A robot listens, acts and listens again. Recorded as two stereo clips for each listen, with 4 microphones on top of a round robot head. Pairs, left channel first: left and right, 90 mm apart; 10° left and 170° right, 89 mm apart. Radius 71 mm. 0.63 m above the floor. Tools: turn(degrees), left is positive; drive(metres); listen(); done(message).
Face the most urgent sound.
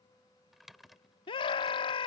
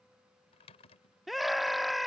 turn(degrees=100)
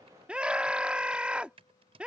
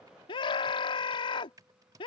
turn(degrees=-15)
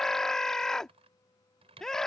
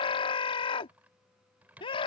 done("Found it: a scream, straight ahead.")